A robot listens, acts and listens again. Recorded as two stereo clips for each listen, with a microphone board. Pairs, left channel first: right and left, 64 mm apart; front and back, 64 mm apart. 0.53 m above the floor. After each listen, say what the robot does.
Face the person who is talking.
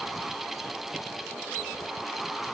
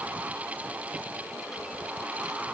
Keep listening.
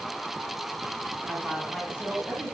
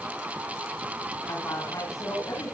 Turn 15° left.
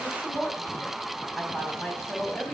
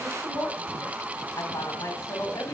Found it: a woman speaking, straight ahead.